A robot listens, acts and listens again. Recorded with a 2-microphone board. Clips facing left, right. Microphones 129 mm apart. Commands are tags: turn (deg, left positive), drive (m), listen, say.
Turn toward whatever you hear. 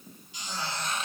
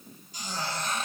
<turn deg="-45"/>
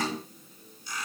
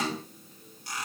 <turn deg="-95"/>
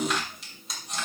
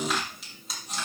<say>Found it: a squeak, straight ahead, over 4 m away.</say>